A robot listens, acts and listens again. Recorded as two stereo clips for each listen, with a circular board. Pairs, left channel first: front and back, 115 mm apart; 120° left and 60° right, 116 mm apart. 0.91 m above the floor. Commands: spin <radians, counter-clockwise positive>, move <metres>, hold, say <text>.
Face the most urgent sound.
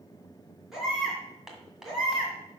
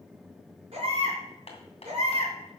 spin -1.66
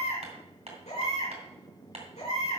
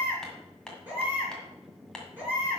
spin 0.26
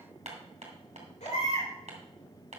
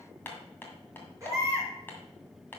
say Found it: a baby crying, straight ahead, 2 to 4 m away.